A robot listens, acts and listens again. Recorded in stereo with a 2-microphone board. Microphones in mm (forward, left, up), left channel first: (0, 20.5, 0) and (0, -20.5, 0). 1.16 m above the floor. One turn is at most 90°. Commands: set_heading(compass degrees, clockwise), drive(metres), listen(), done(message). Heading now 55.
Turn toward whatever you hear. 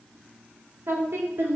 set_heading(145)
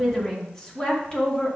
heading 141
set_heading(116)
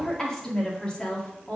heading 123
set_heading(98)
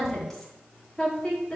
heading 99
set_heading(79)
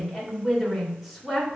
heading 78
done("Facing the woman speaking.")